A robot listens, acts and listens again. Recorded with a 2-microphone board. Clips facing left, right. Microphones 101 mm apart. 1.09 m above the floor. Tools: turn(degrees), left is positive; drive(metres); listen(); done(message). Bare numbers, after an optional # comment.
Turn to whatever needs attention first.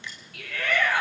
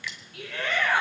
# The shout: about 25° right or 155° right.
turn(-25)
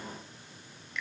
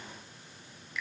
listen()
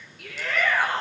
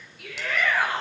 done("Facing the shout.")